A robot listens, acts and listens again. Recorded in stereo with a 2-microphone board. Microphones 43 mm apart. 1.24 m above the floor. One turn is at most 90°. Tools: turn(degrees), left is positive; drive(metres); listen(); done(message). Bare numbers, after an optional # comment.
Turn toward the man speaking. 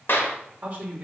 # The man speaking: about 45° right or 135° right.
turn(-45)
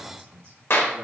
# So it is at 100° right.
turn(-90)
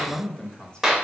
# The man speaking is now 20° left.
turn(20)
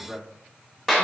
# The man speaking is now 10° left.
turn(10)
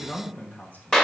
# The man speaking is now 40° left.
turn(40)
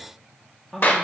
# The man speaking is now 10° left.
turn(10)
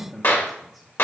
done("Found it: a man speaking, straight ahead.")